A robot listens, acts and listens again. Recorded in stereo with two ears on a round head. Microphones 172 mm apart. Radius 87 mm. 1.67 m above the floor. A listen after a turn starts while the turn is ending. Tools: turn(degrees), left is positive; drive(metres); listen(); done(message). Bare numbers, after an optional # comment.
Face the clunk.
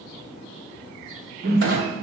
# The clunk: about 55° right or 125° right.
turn(-55)
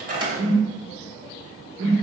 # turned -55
listen()
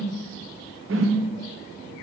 done("I heard a clunk, but can't make it out now. It was about straight ahead or 70° right.")